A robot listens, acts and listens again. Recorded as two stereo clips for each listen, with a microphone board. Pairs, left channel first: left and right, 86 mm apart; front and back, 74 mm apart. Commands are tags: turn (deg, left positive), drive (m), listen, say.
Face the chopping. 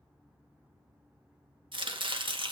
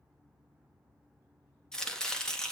<turn deg="-80"/>
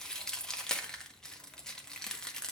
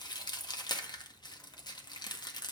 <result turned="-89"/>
<turn deg="10"/>
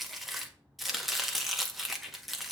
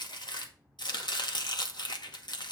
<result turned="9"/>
<say>Facing the chopping.</say>